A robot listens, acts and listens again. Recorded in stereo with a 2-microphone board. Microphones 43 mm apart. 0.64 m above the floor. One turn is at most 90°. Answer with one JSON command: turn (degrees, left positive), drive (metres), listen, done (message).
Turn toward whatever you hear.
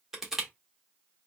{"turn": -30}
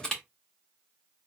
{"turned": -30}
{"turn": 20}
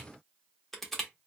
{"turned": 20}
{"done": "Facing the crushing."}